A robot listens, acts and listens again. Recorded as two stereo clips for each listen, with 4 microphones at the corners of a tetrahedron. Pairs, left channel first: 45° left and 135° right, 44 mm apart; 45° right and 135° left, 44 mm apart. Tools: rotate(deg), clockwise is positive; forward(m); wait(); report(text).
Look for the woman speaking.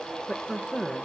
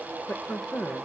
rotate(30)
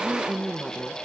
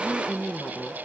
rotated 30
rotate(20)
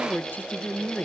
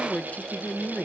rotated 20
report("Found it: a woman speaking, straight ahead, under 1 m away.")